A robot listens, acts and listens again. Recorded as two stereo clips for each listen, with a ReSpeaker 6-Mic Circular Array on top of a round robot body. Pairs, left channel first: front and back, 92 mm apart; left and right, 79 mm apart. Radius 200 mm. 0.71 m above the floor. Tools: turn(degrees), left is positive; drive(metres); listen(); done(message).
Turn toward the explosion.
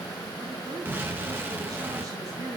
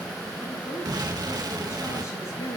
turn(degrees=-115)
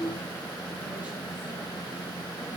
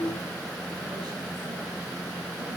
done("Facing where the explosion came from. I can't hear it now.")